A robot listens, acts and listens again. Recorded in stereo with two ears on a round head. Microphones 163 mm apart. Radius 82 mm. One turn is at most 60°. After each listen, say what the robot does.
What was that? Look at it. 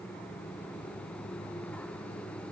Keep listening.
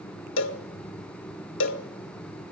Turn 60° left.
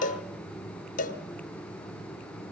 Turn 45° left.
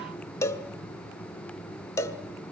Turn 15° left.
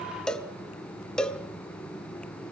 Found it: a cowbell, straight ahead, 1 to 2 m away.